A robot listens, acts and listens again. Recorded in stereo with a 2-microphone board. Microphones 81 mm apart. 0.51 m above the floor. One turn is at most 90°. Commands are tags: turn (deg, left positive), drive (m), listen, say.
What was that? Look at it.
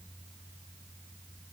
<listen/>
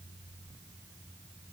<listen/>
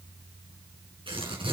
<turn deg="-90"/>
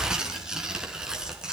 <turn deg="-10"/>
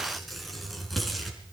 <say>Facing the tearing paper, over 4 m away.</say>